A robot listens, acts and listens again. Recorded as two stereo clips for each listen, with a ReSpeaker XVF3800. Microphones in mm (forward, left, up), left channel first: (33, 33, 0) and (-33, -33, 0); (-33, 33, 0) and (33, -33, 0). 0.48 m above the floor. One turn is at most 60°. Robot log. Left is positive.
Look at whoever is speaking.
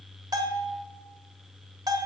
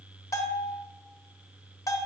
cmd idle
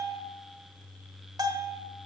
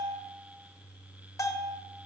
cmd idle
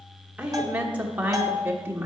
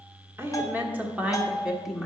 note: The woman speaking: 130° right.
cmd yaw -60
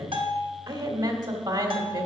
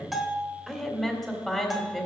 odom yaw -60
note: The woman speaking is now 130° right.
cmd yaw -60
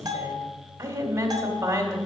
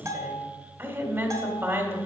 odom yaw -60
note: The woman speaking is now 90° right.
cmd yaw -60
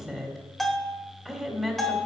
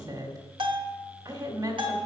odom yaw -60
note: The woman speaking is now 40° right.
cmd yaw -40
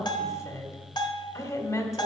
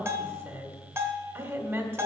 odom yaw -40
note: The woman speaking is now 15° left.
cmd yaw +15
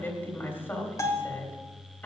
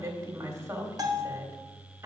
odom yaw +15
end: Facing the woman speaking.